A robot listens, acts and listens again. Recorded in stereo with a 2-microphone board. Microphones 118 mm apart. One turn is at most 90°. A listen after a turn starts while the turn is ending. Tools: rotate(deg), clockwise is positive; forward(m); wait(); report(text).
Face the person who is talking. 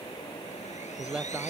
rotate(30)
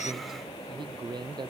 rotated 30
rotate(90)
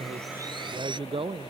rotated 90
rotate(45)
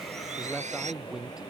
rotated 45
report("Facing the man speaking.")